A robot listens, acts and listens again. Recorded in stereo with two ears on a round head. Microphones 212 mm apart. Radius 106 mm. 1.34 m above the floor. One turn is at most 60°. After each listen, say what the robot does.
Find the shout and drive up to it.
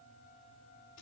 Keep listening.
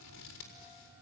Keep listening.
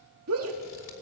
Turn 60° right.
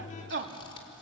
Turn 50° right.
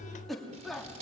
Drive 1.0 m forward.
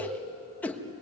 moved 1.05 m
Drive 1.0 m forward.
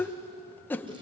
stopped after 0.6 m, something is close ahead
Turn 10° left.
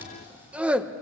I am next to the shout.